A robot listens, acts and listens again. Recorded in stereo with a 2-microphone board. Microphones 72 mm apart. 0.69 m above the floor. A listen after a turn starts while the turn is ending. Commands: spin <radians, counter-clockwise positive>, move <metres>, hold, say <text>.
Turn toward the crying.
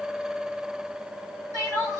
spin -0.96
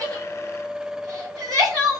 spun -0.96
spin -1.13
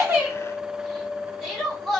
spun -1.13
say Found it: crying, straight ahead, 1 to 2 m away.